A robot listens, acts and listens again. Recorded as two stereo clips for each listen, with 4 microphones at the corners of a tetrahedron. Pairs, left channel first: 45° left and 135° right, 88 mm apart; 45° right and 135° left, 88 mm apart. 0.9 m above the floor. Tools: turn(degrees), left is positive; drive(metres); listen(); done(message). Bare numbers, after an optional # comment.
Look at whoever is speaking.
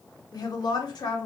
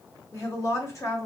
done("Facing the woman speaking, 1 to 2 m away.")